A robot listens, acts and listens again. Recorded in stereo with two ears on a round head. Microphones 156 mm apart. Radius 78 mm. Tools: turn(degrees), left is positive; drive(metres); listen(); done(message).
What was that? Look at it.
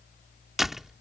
turn(degrees=30)
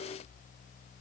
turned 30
listen()
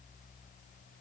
done("I heard a door slam, but can't make it out now. It was about 30° right or 150° left.")